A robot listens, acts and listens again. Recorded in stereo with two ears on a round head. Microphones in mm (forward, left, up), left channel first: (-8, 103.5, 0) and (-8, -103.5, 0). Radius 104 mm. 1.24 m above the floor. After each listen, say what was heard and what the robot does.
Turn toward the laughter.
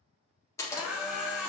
Turn 30° right.
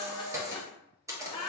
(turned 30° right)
So it is at 25° left. Turn 25° left.
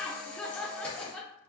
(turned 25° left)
Facing the laughter.